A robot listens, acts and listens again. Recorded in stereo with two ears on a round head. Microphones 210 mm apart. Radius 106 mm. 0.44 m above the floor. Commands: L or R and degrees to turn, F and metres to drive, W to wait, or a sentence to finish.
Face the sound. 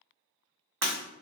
R65
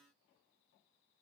W
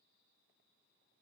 I heard breaking glass, but can't make it out now. It was about straight ahead or 50° right.